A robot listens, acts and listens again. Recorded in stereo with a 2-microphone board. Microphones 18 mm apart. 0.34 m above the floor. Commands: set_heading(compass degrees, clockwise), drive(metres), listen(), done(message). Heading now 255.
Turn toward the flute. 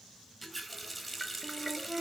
set_heading(310)
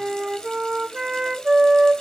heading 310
set_heading(355)
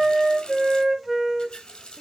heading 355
done("Facing the flute.")